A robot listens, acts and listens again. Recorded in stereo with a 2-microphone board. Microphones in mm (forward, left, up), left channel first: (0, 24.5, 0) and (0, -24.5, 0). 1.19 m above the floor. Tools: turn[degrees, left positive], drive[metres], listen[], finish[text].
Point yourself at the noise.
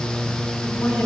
Action: turn[90]
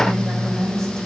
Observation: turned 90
Action: finish[Facing the woman speaking, over 4 m away.]